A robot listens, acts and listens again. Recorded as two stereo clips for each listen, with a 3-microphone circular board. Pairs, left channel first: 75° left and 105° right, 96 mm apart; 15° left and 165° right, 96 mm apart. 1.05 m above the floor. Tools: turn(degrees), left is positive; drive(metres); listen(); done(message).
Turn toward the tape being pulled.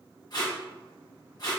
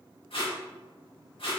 turn(degrees=30)
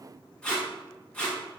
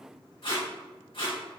done("Facing the tape being pulled.")